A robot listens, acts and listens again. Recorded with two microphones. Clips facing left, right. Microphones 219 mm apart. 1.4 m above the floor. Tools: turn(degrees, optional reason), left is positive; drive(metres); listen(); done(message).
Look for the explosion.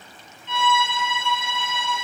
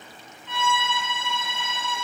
listen()
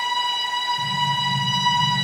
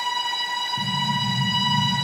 turn(degrees=-65, reason="The explosion: about 65° right or 115° right.")
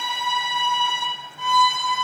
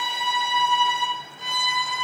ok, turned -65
listen()
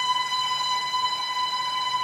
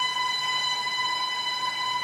done("I heard an explosion, but can't make it out now. It was about straight ahead or 50° right.")